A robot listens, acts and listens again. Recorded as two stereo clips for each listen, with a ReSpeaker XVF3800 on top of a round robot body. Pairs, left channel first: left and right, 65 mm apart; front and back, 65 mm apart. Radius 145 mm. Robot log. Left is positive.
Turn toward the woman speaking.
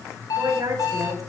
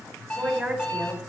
note: The woman speaking: 110° right.
cmd yaw -110
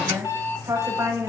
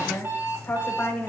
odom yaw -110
note: The woman speaking is now 60° right.
cmd yaw -60
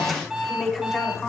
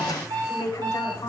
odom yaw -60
end: Found it: a woman speaking, straight ahead.